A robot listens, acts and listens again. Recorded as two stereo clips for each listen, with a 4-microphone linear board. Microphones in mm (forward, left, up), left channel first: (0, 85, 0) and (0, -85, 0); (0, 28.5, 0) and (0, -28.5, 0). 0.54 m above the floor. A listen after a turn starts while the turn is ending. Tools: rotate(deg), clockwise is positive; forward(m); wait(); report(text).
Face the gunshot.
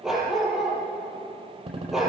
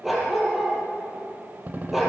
rotate(35)
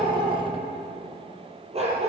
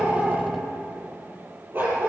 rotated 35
wait()
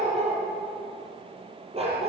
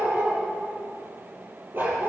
report("I heard a gunshot, but can't make it out now. It was about straight ahead or 110° right.")